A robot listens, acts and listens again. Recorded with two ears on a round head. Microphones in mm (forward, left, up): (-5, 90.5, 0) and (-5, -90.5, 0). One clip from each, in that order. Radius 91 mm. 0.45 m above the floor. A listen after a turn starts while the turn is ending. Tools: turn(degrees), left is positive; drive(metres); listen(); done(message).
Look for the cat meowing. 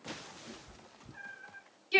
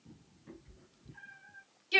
turn(degrees=55)
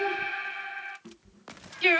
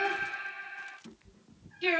turn(degrees=30)
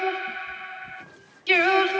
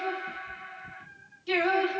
listen()
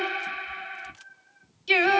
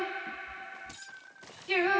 turn(degrees=-25)
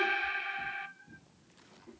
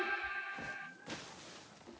turn(degrees=-15)
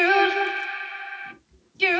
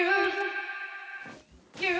done("Facing the cat meowing, 2 to 4 m away.")